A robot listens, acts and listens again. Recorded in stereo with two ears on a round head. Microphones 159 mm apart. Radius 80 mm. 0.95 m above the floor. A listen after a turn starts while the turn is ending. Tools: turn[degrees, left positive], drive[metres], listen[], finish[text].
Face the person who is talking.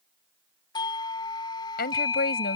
Thought: The woman speaking: about 60° left or 120° left.
Action: turn[60]
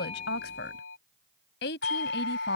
Thought: So it is at 65° left.
Action: turn[65]
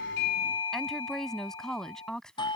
Action: finish[Facing the woman speaking.]